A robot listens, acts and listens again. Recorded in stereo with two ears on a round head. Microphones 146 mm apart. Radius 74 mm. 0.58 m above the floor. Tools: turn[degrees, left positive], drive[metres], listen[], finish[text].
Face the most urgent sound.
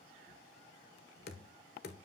Action: listen[]
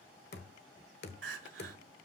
Action: turn[-90]
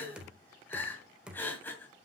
Thought: So it is at 10° left.
Action: turn[10]
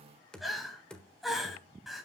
Action: finish[Facing the crying, 1 to 2 m away.]